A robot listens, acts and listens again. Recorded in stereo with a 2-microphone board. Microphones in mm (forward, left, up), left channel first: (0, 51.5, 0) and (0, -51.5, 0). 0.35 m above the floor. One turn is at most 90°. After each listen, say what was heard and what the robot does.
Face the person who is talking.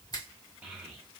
The child speaking: about 15° right or 165° right. Turn 15° right.
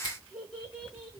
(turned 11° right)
Found it: a child speaking, straight ahead.